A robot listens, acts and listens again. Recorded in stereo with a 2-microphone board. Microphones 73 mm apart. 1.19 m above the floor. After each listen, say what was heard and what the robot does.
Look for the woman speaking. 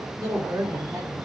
The woman speaking: about 45° right or 135° right. Turn 45° right.
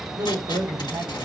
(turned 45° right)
So it is at 90° right. Turn 90° right.
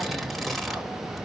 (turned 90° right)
Keep listening.
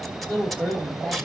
The woman speaking is now 10° left. Turn 10° left.
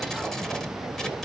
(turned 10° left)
Keep listening.
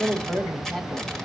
Facing the woman speaking, 2 to 4 m away.